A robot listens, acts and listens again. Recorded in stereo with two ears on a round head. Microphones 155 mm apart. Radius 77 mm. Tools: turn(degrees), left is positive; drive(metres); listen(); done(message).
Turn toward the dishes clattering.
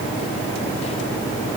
listen()
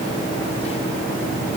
listen()
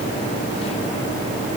done("I can't make out dishes clattering.")